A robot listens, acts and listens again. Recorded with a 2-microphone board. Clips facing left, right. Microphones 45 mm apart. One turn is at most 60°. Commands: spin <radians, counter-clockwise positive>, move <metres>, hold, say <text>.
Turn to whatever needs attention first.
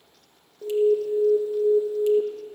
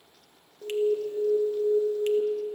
spin 0.35
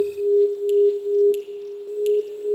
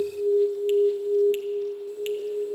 spin 1.05
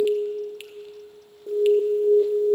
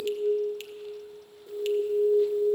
spin 1.05
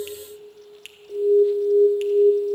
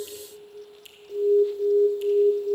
spin 0.26
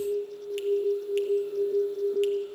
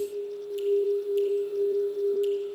say Facing the alarm, under 1 m away.